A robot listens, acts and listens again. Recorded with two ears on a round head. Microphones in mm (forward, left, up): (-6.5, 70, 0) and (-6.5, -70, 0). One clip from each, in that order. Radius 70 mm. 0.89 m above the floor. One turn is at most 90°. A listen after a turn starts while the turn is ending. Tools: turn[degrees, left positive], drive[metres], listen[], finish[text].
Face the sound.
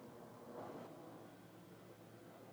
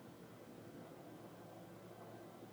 Action: listen[]
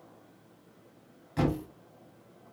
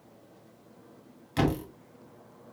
Thought: The thud: about 70° right or 110° right.
Action: turn[-70]
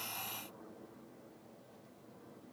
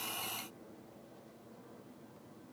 Action: listen[]
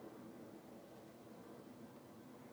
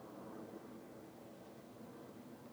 Action: finish[I heard a thud, but can't make it out now. It was about straight ahead or 40° right.]